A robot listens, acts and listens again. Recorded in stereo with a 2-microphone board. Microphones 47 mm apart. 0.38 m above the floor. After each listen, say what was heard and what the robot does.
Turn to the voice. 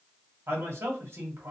The man speaking: about 60° right or 120° right. Turn 60° right.
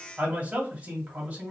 So it is at 35° right. Turn 35° right.
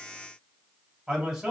The man speaking is now 10° right. Turn 10° right.
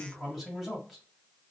Found it: a man speaking, straight ahead.